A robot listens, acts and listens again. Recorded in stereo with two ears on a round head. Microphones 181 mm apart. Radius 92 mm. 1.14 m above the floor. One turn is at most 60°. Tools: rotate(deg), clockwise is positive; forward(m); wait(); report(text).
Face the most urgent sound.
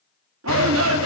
rotate(60)
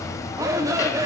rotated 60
rotate(15)
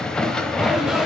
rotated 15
wait()
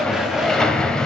wait()
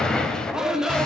report("Facing the shout, 2 to 4 m away.")